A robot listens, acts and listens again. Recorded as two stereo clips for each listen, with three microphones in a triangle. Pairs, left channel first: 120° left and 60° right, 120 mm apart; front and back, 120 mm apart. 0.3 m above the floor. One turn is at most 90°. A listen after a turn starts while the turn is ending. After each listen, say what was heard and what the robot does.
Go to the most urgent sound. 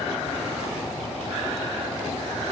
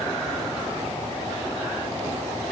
Keep listening.
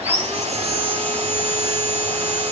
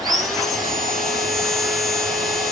Keep listening.
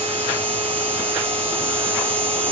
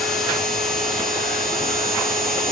I can't make out anything urgent, only sawing.